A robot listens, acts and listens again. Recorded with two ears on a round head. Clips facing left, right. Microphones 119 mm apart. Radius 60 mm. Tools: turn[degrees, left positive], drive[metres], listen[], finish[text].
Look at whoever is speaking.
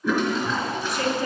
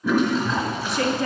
Thought: The woman speaking: about 50° right or 130° right.
Action: turn[-50]
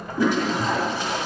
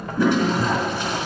Action: listen[]
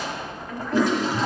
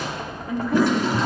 Thought: So it is at 10° right.
Action: turn[-10]
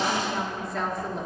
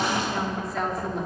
Action: finish[Found it: a woman speaking, straight ahead, 1 to 2 m away.]